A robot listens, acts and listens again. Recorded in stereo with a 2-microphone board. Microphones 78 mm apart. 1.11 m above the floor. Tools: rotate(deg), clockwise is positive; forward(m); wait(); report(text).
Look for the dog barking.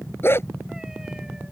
rotate(-35)
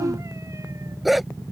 report("Found it: a dog barking, straight ahead.")